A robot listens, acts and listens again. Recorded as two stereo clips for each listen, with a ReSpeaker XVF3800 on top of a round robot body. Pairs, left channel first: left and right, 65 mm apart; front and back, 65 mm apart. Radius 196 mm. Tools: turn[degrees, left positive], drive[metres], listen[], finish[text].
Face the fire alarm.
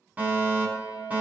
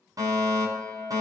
Thought: The fire alarm: 155° right.
Action: turn[-155]
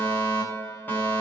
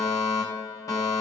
Thought: The fire alarm is now 30° left.
Action: turn[30]
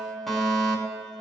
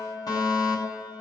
Action: finish[Facing the fire alarm, over 4 m away.]